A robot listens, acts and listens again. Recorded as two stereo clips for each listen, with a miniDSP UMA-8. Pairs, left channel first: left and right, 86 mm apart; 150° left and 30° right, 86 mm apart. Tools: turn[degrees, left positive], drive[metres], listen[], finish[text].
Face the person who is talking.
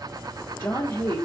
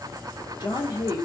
Thought: The woman speaking: 140° left.
Action: turn[140]
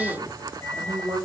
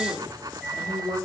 Thought: The woman speaking is now 20° right.
Action: turn[-20]
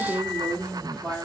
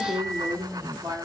Action: finish[Found it: a woman speaking, straight ahead, 1 to 2 m away.]